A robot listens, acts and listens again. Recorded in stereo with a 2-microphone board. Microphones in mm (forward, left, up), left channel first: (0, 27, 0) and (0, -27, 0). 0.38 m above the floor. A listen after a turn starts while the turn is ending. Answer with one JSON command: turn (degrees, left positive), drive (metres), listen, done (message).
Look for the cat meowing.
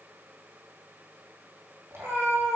{"turn": -55}
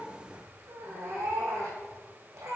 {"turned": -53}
{"turn": -65}
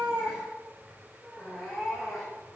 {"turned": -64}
{"done": "Found it: a cat meowing, straight ahead."}